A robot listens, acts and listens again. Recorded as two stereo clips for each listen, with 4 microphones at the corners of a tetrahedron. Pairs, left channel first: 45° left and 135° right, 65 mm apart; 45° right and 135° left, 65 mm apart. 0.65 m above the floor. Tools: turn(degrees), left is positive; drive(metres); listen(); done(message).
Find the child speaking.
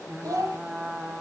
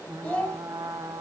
turn(degrees=-110)
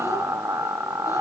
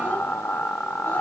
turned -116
listen()
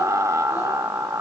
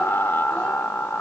listen()
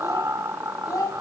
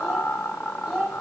turn(degrees=45)
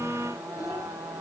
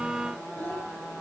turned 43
listen()
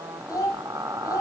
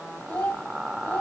turn(degrees=10)
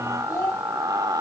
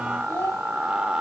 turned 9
done("Facing the child speaking.")